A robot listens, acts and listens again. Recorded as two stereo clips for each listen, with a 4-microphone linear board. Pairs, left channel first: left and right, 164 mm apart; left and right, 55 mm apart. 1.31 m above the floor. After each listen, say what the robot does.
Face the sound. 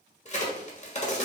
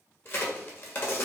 Turn 45° left.
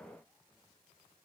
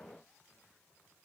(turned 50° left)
Keep listening.
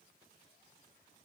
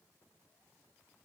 I heard a crack, but can't make it out now. It was about 5° right or 85° left.